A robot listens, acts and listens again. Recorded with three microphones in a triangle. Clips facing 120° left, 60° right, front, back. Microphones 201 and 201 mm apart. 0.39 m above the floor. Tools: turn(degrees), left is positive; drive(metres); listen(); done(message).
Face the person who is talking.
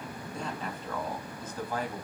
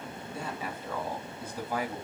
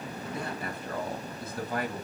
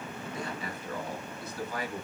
turn(degrees=15)
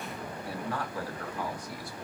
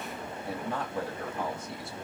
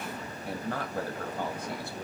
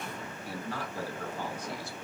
done("Facing the man speaking.")